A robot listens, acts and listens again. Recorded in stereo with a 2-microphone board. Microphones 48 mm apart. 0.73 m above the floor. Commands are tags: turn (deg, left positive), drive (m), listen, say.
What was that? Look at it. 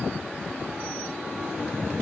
<listen/>
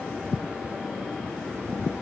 <listen/>
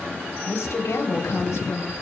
<turn deg="90"/>
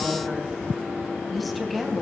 <say>Found it: a woman speaking, straight ahead, over 4 m away.</say>